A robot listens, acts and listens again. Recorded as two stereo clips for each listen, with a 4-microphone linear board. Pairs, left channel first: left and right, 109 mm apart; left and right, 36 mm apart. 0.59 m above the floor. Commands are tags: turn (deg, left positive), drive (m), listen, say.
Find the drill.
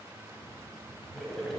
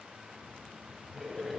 <listen/>
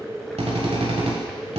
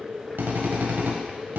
<turn deg="-90"/>
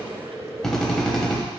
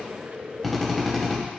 <say>Found it: a drill, straight ahead, 1 to 2 m away.</say>